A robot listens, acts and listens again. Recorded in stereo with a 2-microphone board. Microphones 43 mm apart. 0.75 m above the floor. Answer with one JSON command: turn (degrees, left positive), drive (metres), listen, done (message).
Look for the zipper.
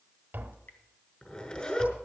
{"turn": 25}
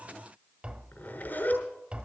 {"turn": 130}
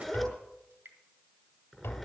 {"done": "Found it: a zipper, straight ahead, over 4 m away."}